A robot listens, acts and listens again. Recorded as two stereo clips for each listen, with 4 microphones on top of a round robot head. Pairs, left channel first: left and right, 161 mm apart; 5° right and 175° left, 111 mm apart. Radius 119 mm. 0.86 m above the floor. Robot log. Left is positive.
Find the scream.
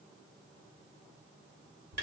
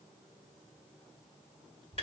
cmd idle
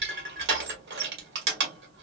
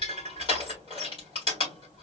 cmd idle
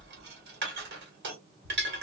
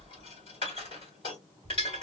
end: I can't make out a scream, only crushing.